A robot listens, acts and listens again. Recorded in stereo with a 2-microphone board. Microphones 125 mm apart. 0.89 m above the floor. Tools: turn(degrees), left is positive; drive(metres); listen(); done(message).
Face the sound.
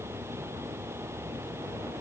listen()
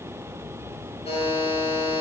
turn(degrees=55)
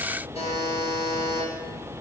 turn(degrees=65)
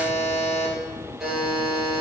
done("Found it: a buzzer, straight ahead.")